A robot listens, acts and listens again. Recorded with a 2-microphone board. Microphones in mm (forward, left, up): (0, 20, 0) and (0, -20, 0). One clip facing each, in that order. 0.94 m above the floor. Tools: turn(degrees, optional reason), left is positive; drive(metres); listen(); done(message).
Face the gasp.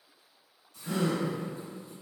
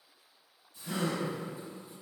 turn(degrees=40, reason="The gasp: about 40° left or 140° left.")
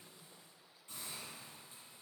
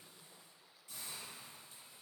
listen()
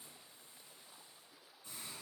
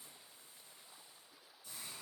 done("I heard a gasp, but can't make it out now. It was about straight ahead or 100° left.")